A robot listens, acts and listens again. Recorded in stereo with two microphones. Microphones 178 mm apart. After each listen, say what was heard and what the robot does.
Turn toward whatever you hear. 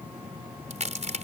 The crack: about 40° right or 140° right. Turn 40° right.
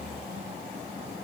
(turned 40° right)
Keep listening.
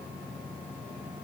I heard a crack, but can't make it out now. It was about straight ahead or 100° right.